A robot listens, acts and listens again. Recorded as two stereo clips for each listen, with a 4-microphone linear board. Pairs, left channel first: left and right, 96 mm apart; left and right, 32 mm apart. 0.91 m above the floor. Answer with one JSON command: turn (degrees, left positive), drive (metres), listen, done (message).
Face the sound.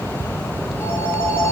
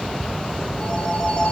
{"turn": 25}
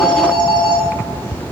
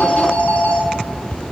{"turn": 130}
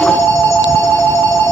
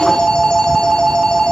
{"turn": 25}
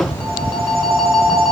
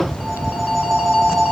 {"done": "Facing the phone ringing, 2 to 4 m away."}